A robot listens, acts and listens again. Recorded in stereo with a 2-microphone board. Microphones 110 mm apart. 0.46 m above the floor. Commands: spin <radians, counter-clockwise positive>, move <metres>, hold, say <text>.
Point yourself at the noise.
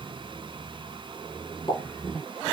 spin 0.96
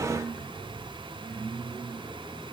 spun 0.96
hold
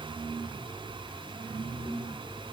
say I heard a pop, but can't make it out now. It was about straight ahead or 70° left.